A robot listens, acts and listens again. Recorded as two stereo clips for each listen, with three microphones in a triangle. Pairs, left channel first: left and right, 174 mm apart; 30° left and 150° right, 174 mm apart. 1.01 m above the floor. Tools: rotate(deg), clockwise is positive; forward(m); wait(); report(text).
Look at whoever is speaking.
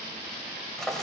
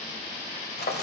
wait()
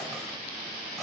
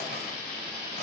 wait()
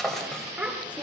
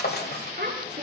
rotate(170)
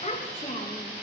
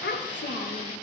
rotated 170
rotate(-40)
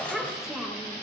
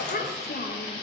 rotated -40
report("Facing the child speaking.")